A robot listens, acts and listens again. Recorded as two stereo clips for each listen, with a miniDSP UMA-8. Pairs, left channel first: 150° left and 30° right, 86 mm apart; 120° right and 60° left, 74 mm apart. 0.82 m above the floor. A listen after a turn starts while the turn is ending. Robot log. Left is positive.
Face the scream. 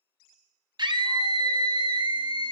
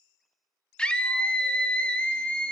note: The scream: 45° right.
cmd yaw -45
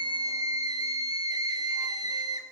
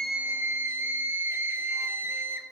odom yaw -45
end: Found it: a scream, straight ahead, 1 to 2 m away.